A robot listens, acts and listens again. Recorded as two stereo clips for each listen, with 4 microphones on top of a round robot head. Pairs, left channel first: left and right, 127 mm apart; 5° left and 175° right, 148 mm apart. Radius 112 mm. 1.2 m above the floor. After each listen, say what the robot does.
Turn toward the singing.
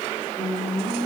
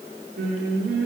Turn 175° right.
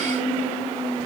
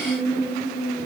Turn 55° right.
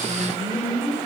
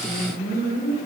Turn 15° right.
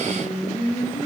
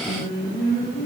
Found it: singing, straight ahead.